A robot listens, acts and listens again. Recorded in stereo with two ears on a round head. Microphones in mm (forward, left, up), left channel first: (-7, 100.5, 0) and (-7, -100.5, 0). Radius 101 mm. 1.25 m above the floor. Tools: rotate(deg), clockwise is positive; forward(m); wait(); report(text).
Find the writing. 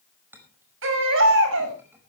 wait()
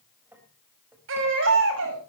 wait()
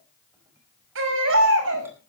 report("I can't make out writing to turn to.")